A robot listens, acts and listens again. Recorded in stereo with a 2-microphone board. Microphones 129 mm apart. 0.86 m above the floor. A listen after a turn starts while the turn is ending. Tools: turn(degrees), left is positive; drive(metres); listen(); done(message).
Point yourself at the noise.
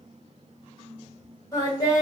turn(degrees=30)
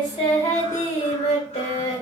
turn(degrees=115)
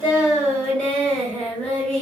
turn(degrees=15)
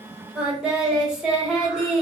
done("Found it: singing, straight ahead.")